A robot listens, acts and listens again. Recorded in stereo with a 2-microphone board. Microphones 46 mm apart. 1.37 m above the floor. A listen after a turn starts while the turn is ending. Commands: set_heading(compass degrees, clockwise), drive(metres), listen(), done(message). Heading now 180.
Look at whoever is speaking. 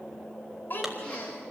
set_heading(135)
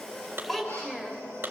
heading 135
done("Found it: a child speaking, straight ahead, 2 to 4 m away.")